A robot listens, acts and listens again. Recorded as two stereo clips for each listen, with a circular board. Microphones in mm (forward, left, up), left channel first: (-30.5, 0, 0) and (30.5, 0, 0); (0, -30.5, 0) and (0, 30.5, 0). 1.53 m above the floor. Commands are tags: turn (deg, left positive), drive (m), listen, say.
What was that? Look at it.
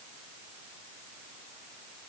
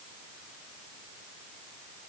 <listen/>
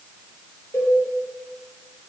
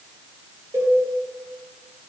<turn deg="130"/>
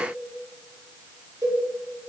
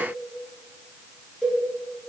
<turn deg="-10"/>
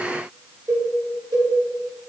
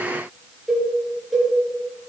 <say>Facing the cowbell.</say>